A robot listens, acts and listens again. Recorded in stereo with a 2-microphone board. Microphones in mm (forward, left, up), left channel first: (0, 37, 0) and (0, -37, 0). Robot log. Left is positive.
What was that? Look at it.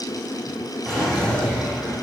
cmd yaw +30
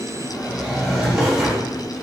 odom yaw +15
note: So it is at 10° right.
cmd yaw -10
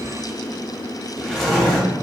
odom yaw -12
end: Facing the drawer, 1 to 2 m away.